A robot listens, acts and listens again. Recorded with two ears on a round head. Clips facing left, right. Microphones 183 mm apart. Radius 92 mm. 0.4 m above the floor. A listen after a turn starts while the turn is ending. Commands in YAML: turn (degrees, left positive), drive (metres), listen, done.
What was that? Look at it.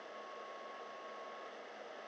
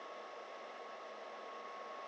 listen: true
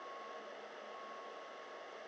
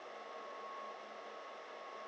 listen: true
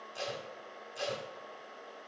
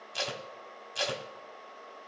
turn: -90
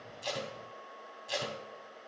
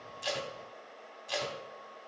done: "Facing the tape being pulled, under 1 m away."